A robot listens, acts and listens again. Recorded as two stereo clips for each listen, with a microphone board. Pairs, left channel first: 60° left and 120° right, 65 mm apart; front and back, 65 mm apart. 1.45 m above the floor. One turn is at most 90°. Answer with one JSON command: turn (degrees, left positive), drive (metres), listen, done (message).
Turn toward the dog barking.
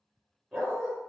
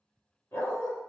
{"turn": -25}
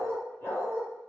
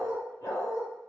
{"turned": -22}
{"turn": 15}
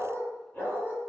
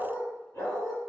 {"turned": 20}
{"turn": 15}
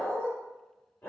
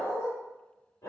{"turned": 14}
{"turn": 15}
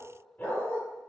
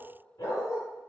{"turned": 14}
{"turn": 10}
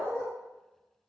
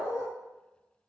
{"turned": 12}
{"done": "Facing the dog barking."}